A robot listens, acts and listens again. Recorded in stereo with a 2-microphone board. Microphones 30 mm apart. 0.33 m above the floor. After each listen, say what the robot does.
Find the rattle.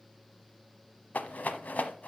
Turn 65° left.
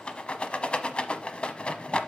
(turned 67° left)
Turn 40° left.
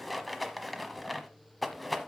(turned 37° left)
Found it: a rattle, straight ahead.